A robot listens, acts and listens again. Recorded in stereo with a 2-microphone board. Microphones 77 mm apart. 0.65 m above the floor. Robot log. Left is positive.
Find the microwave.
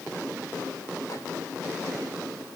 cmd idle
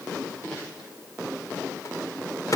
note: The microwave: about 50° left or 130° left.
cmd yaw +50
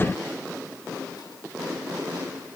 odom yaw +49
cmd idle
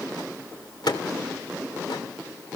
note: So it is at 80° left.
cmd yaw +80
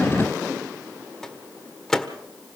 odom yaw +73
end: Facing the microwave, 1 to 2 m away.